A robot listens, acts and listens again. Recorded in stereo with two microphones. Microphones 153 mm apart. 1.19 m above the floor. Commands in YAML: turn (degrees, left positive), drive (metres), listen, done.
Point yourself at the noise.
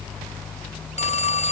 turn: 45
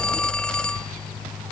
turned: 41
listen: true
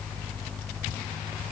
listen: true
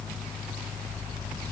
done: "I heard a phone ringing, but can't make it out now. It was about 5° left or 95° left."